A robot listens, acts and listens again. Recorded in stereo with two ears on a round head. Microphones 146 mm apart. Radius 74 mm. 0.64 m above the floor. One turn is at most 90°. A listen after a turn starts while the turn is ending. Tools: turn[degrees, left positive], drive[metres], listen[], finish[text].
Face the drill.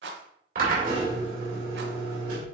Thought: The drill: about 55° right or 125° right.
Action: turn[-55]
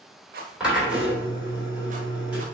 Thought: So it is at 10° right.
Action: turn[-10]
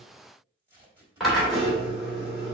Action: finish[Facing the drill.]